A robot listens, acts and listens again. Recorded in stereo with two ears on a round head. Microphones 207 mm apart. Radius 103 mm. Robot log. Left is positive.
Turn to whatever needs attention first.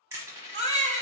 note: The baby crying: about 25° right or 155° right.
cmd yaw -25
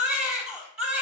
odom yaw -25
end: Found it: a baby crying, straight ahead, under 1 m away.